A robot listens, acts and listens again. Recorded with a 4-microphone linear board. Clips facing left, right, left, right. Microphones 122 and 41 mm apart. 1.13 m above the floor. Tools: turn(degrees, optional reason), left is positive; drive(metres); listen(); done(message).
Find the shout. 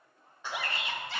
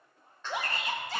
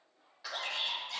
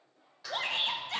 turn(degrees=-40, reason="The shout: about 40° right or 140° right.")
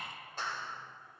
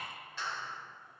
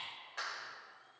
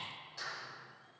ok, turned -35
listen()
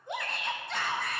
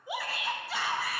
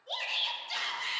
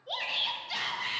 done("Found it: a shout, straight ahead.")